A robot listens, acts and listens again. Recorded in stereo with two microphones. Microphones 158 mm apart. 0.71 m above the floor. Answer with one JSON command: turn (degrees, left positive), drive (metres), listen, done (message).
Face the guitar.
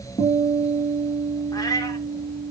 {"turn": 40}
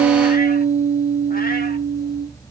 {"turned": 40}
{"done": "Found it: a guitar, straight ahead, over 4 m away."}